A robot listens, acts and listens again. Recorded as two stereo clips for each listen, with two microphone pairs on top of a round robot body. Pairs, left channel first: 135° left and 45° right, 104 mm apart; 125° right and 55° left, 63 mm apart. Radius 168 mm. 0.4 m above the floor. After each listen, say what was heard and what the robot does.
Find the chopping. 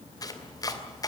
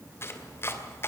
The chopping: 175° right. Turn 175° right.
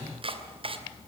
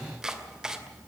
The chopping is now 20° right. Turn 20° right.
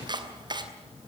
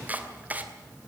Facing the chopping, 2 to 4 m away.